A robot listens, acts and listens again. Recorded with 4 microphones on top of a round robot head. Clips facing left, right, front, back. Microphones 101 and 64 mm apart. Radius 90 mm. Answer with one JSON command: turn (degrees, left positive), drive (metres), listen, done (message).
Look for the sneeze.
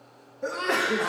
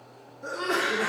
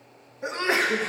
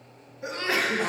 {"turn": 60}
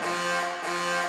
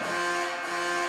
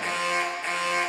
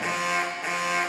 {"done": "I heard a sneeze from this way, but can't make it out now."}